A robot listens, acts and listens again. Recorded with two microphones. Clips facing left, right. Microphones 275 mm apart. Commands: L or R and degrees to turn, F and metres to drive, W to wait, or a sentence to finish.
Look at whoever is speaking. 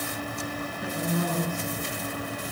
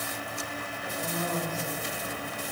L55
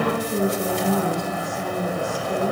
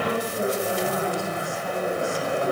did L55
L70
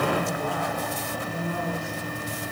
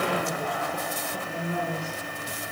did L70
R20
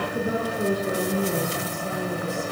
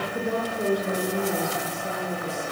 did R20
Found it: a woman speaking, straight ahead.